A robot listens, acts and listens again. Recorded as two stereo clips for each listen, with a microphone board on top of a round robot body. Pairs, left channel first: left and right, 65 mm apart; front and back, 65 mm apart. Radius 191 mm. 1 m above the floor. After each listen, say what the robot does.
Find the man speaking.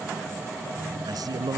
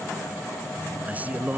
Turn 110° right.
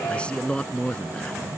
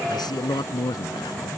Turn 15° left.
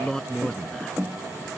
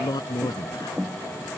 Turn 10° left.
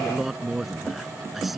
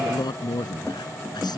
Facing the man speaking.